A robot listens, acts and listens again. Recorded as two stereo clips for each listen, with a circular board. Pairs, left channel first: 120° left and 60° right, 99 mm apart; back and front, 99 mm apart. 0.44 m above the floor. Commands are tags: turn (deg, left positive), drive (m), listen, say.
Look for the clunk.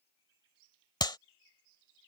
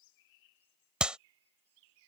<listen/>
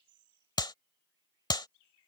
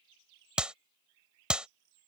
<listen/>
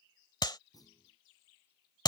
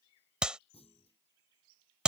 <turn deg="170"/>
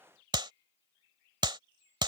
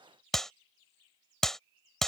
<say>I heard a clunk from this way, but can't make it out now.</say>